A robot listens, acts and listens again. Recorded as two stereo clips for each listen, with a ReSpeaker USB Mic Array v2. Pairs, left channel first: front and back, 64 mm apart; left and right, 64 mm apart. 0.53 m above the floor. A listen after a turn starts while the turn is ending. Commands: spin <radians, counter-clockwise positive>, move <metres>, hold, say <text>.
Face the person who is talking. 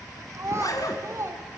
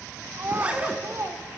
spin -2.44
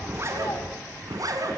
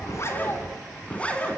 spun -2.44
hold
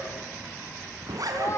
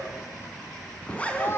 spin 0.70
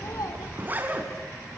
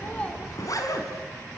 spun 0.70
hold
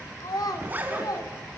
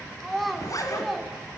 say Facing the child speaking.